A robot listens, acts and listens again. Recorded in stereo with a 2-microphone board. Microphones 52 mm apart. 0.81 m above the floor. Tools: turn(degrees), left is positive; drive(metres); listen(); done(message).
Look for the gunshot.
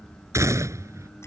turn(degrees=-90)
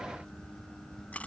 done("I heard a gunshot from this way, but can't make it out now.")